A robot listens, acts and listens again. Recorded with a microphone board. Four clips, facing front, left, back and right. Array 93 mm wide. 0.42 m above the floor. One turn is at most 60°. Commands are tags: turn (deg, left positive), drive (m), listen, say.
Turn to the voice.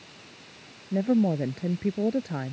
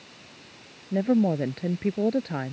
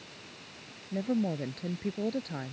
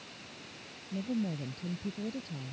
<turn deg="60"/>
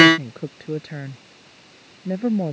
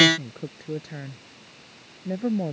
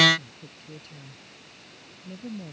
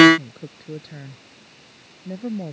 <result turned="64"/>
<turn deg="20"/>
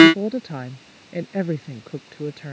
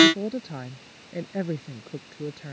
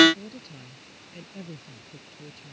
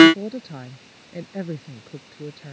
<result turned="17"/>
<turn deg="10"/>
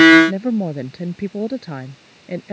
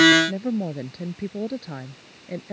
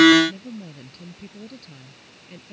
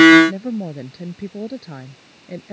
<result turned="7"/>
<say>Facing the woman speaking.</say>